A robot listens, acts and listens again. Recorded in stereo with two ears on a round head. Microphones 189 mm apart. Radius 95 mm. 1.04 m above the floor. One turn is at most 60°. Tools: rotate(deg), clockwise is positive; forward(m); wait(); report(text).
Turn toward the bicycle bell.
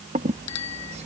rotate(-60)
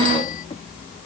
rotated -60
rotate(-30)
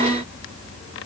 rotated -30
wait()
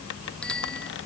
report("Facing the bicycle bell.")